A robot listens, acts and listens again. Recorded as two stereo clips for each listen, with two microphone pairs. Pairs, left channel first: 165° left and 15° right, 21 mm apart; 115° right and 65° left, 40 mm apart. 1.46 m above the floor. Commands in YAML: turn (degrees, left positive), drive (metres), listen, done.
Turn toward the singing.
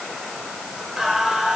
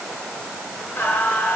turn: -85
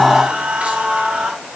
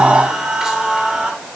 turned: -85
turn: -10
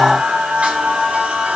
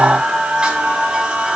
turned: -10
done: "Facing the singing, 2 to 4 m away."